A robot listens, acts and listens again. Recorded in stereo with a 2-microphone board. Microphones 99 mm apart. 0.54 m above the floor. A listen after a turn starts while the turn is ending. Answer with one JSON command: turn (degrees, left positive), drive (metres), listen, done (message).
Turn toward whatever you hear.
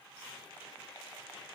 {"listen": true}
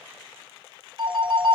{"turn": -55}
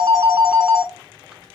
{"done": "Facing the phone ringing, under 1 m away."}